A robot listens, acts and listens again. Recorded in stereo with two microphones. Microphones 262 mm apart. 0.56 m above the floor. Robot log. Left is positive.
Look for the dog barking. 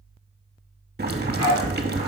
cmd yaw -90
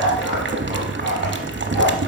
end: Facing the dog barking, over 4 m away.